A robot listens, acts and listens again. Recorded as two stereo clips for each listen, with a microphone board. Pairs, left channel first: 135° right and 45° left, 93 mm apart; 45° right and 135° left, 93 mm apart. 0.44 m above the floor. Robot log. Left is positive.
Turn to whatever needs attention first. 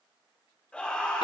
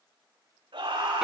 note: The scream: 145° left.
cmd yaw +145
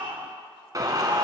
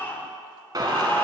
note: The scream is now 20° left.
cmd yaw +20
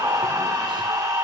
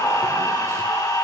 end: Facing the scream, over 4 m away.